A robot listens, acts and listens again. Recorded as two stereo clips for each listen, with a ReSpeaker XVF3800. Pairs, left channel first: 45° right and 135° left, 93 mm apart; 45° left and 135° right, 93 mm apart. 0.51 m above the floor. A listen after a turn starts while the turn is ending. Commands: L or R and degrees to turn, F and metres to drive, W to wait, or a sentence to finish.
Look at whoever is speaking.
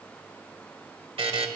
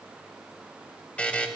W
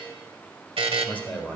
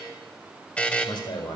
L30
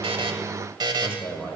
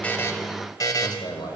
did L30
L20
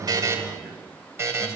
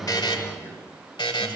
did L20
L10
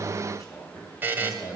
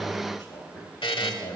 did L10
L10
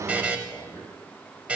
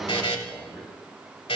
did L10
Found it: a man speaking, straight ahead, 2 to 4 m away.